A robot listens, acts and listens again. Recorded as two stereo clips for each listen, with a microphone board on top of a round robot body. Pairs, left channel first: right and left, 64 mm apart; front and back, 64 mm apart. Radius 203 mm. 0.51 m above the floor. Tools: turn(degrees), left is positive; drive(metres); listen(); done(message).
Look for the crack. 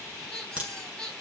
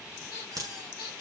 turn(degrees=160)
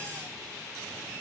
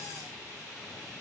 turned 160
done("I heard a crack from this way, but can't make it out now.")